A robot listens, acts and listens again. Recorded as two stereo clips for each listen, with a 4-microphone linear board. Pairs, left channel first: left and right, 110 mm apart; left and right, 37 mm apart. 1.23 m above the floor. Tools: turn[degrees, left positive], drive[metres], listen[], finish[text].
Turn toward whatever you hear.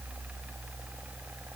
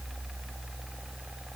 Action: listen[]
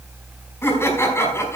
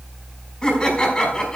Thought: The laughter: about 25° left or 155° left.
Action: turn[25]
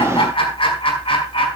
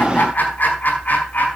Thought: So it is at 125° left.
Action: turn[125]
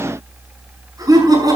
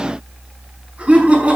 Thought: The laughter is now 35° right.
Action: turn[-35]
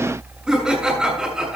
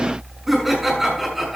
Action: finish[Facing the laughter.]